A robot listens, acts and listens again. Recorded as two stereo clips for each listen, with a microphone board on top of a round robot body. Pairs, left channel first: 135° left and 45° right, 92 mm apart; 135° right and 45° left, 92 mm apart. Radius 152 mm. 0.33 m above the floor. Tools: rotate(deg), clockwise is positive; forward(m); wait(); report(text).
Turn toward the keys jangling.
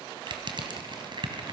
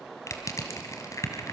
wait()
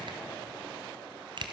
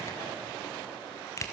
wait()
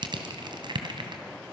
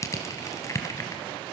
report("I can't make out keys jangling to turn to.")